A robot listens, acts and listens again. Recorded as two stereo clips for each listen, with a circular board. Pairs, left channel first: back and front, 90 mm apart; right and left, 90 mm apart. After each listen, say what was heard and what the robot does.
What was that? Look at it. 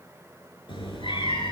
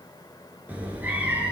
The cat meowing: 165° left. Turn 165° left.
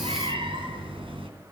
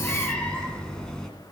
Found it: a cat meowing, straight ahead.